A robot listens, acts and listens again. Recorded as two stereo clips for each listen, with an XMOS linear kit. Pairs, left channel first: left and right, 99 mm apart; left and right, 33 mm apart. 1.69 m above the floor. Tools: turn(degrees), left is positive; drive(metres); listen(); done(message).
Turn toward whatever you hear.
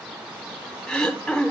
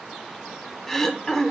turn(degrees=30)
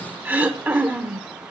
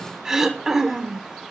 turn(degrees=-20)
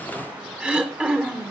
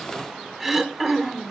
turn(degrees=-10)
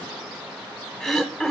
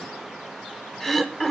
done("Found it: throat clearing, straight ahead.")